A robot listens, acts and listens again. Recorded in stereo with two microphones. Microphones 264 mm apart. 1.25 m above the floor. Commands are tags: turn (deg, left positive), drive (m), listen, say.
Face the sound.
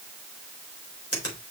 <turn deg="60"/>
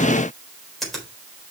<say>Facing the finger snap.</say>